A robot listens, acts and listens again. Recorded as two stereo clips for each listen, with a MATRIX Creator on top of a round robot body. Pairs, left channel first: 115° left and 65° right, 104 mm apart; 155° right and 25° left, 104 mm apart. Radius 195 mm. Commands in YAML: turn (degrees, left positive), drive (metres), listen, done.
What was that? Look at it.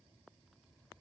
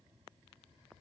listen: true
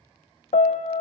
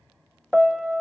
turn: 110
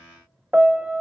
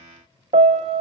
turn: 15
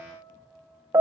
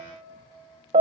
done: "Found it: a piano, straight ahead."